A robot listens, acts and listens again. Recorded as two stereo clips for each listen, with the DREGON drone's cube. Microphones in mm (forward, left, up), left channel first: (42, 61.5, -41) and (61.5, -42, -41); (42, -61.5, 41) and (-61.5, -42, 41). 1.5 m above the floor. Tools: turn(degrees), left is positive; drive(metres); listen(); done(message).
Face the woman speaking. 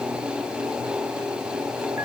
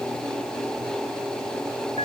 listen()
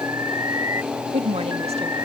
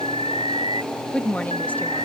turn(degrees=-85)
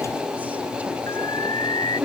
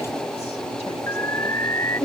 done("Found it: a woman speaking, straight ahead.")